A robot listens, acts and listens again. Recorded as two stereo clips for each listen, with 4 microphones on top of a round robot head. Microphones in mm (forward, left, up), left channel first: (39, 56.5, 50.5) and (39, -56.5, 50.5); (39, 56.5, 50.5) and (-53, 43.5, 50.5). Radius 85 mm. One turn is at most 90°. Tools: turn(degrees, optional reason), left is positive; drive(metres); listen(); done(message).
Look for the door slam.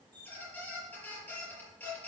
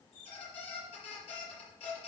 listen()
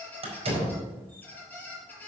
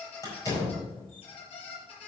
turn(degrees=-55, reason="The door slam: 55° right.")
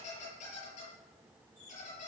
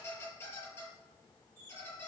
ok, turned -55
done("Facing where the door slam came from. I can't hear it now.")